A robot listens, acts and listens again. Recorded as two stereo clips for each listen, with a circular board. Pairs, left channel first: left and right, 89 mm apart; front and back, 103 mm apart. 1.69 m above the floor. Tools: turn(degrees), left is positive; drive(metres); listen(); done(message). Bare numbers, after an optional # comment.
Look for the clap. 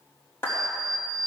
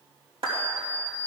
# The clap: 155° left.
turn(155)
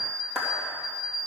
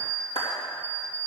done("Facing the clap, 2 to 4 m away.")